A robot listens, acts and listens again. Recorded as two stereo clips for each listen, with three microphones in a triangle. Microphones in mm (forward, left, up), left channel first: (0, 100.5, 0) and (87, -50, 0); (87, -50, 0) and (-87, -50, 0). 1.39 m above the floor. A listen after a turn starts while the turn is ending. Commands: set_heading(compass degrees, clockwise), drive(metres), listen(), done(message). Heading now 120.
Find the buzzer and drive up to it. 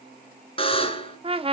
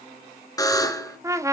set_heading(55)
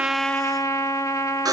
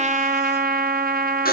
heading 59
drive(1.0)
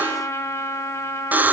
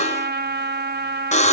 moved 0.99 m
set_heading(44)
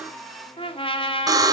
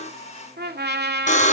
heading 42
drive(1.0)
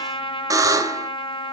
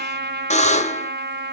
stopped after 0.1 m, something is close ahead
done("I am next to the buzzer.")